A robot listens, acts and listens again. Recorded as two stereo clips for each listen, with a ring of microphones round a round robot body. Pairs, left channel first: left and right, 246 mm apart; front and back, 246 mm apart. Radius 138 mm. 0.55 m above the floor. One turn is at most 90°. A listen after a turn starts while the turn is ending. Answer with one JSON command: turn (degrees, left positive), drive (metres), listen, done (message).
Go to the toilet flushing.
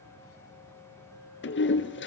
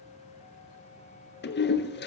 {"turn": 50}
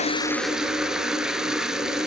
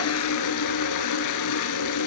{"drive": 1.0}
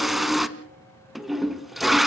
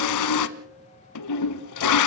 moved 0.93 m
{"drive": 1.0}
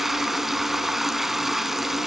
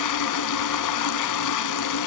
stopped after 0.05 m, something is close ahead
{"done": "I am next to the toilet flushing."}